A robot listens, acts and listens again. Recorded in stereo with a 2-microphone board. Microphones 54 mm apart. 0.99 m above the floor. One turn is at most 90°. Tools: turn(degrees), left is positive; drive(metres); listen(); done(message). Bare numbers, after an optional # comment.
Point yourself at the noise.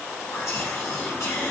# The whispering: about 70° left or 110° left.
turn(70)
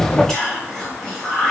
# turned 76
# So it is at 10° left.
turn(10)
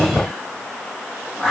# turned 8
done("Found it: whispering, straight ahead, 1 to 2 m away.")